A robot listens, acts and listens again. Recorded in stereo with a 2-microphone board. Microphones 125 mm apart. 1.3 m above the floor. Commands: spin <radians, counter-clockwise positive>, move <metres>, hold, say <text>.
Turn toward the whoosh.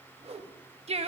spin -1.05
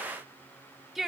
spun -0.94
hold
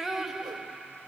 hold
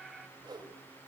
spin -0.79
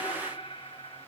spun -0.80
hold
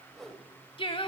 say Facing the whoosh.